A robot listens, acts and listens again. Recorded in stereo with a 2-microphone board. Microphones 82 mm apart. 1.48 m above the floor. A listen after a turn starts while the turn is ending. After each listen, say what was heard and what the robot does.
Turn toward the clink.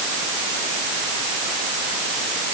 Keep listening.
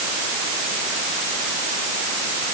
Keep listening.
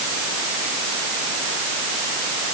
I can't make out a clink to turn to.